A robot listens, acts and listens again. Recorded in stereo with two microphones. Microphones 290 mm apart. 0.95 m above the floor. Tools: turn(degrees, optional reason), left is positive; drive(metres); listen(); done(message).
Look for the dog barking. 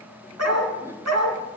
turn(degrees=-65, reason="The dog barking: about 65° right or 115° right.")
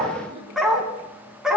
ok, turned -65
done("Found it: a dog barking, straight ahead.")